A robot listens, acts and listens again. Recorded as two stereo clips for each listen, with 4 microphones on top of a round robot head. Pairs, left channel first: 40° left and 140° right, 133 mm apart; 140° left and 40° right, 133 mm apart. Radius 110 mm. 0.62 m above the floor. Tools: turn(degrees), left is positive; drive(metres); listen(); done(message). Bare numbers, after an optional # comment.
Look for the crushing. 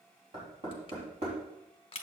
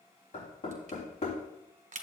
# The crushing: 10° right.
turn(-10)
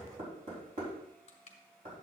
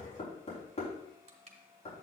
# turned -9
listen()
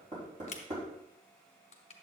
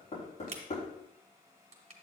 done("Facing the crushing, 1 to 2 m away.")